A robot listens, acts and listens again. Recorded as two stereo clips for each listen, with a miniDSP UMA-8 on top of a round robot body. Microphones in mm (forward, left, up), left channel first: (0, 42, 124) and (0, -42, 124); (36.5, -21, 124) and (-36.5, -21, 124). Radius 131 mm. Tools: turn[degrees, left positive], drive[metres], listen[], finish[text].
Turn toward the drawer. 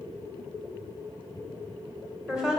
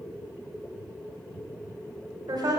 Action: listen[]
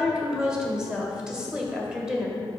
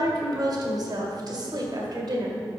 Action: listen[]
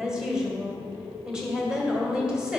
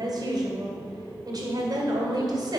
Action: finish[I can't make out a drawer to turn to.]